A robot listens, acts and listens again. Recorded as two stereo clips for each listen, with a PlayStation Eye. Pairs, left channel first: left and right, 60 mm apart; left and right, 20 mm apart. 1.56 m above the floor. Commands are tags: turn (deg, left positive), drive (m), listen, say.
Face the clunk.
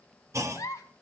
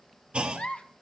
<turn deg="-55"/>
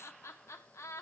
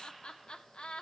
<listen/>
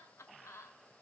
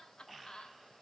<say>I heard a clunk, but can't make it out now. It was about straight ahead or 70° right.</say>